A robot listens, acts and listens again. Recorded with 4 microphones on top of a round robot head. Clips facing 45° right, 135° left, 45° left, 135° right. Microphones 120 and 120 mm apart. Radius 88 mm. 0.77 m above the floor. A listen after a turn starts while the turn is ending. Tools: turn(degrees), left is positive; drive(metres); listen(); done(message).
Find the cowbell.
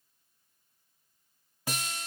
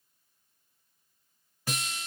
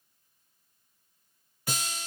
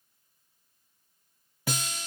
listen()
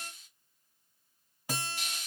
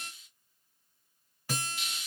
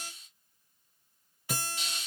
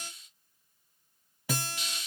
listen()
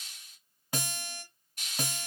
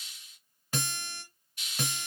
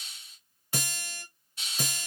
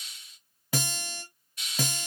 done("I can't make out a cowbell, only a hiss and a guitar.")